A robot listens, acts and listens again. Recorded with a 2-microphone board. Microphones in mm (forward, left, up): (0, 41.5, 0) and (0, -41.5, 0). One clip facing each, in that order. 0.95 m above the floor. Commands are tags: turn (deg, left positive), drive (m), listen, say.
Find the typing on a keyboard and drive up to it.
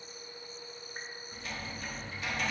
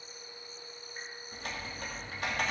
<turn deg="-55"/>
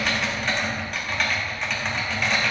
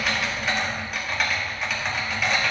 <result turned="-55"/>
<drive m="1.0"/>
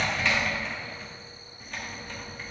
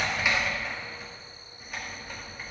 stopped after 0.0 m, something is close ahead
<turn deg="-10"/>
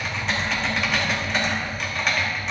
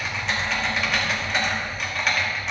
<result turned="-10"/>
<say>Blocked. The typing on a keyboard is further on, straight ahead.</say>